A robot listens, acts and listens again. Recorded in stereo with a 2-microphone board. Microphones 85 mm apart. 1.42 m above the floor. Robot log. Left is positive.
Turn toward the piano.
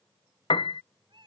note: The piano: about 75° left or 105° left.
cmd yaw +75
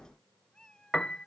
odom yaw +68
note: So it is at 10° left.
cmd yaw +10
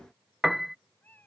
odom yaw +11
end: Found it: a piano, straight ahead.